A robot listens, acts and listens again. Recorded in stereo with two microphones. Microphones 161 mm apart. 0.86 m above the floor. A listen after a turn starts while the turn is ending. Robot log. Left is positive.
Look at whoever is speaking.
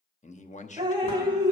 note: The man speaking: about 50° left or 130° left.
cmd yaw +50
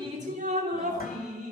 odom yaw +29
cmd idle
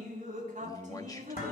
note: So it is at 25° left.
cmd yaw +25
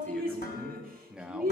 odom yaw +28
end: Found it: a man speaking, straight ahead.